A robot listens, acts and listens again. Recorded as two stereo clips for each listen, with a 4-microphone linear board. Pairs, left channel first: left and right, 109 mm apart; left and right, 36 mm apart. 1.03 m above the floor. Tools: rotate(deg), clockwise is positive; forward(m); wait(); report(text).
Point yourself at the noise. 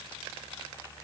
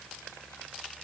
wait()
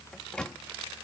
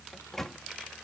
rotate(-30)
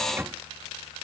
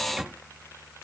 rotate(20)
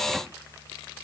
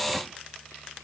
wait()
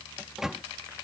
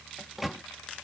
report("Facing the microwave.")